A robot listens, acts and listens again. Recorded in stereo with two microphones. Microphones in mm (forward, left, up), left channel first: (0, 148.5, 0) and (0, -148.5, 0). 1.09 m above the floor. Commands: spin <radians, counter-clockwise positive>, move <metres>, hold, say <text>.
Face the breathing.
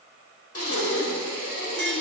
spin 0.87
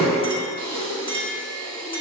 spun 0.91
spin 1.22
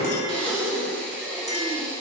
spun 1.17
say Facing the breathing, 1 to 2 m away.